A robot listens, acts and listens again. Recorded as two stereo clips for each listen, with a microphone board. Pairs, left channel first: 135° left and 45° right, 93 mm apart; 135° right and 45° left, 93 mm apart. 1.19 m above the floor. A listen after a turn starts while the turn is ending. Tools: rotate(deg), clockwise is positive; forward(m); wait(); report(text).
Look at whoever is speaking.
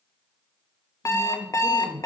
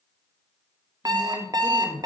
rotate(-110)
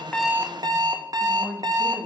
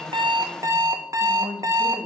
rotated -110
rotate(-10)
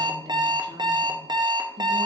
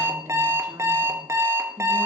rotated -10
wait()
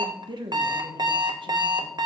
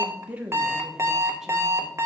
rotate(30)
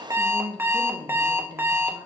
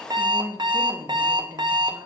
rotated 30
rotate(10)
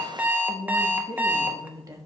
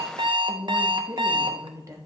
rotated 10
report("Found it: a woman speaking, straight ahead, 1 to 2 m away.")